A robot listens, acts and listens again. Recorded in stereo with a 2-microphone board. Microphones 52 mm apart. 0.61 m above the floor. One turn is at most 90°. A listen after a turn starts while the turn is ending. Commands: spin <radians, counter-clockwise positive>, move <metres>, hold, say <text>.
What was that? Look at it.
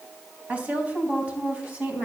spin -0.52
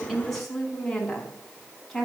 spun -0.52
say Found it: a woman speaking, straight ahead.